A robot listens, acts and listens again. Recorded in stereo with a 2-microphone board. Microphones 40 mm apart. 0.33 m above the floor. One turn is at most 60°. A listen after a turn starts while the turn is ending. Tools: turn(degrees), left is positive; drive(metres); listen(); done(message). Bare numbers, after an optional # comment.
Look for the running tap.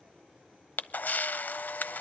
listen()
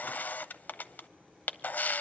listen()
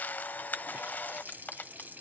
# The running tap: about 55° right or 125° right.
turn(-55)
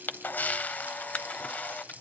# So it is at 55° right.
turn(-55)
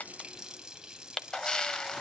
# The running tap is now 20° right.
turn(-20)
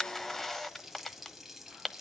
done("Facing the running tap, 1 to 2 m away.")